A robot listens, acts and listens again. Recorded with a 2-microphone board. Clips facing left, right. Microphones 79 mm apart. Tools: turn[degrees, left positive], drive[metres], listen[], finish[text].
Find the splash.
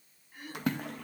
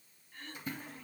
Thought: The splash: about 75° left or 105° left.
Action: turn[75]
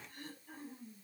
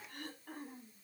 Action: listen[]
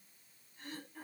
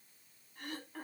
Action: finish[I heard a splash, but can't make it out now. It was about straight ahead or 30° left.]